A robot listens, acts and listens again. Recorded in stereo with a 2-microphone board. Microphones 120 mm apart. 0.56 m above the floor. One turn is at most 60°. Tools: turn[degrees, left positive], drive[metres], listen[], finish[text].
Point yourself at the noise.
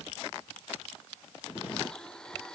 Action: turn[30]
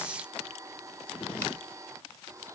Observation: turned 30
Thought: So it is at 25° right.
Action: turn[-25]
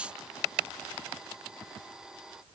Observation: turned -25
Action: finish[Found it: a blender, straight ahead.]